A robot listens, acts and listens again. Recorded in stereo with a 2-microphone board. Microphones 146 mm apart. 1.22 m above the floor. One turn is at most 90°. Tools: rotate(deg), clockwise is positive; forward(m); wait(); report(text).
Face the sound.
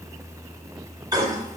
rotate(25)
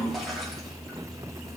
wait()
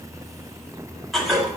report("Found it: a toilet flushing, straight ahead, 2 to 4 m away.")